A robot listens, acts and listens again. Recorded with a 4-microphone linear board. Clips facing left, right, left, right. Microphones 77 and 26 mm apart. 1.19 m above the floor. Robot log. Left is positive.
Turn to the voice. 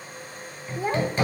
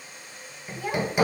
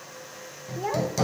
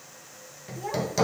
note: The child speaking: about 30° left or 150° left.
cmd yaw +30
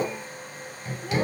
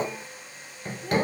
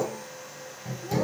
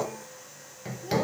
cmd idle
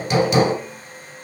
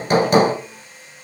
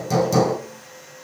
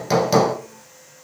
cmd idle
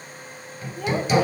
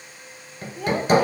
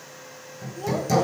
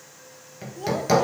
end: Facing the child speaking, under 1 m away.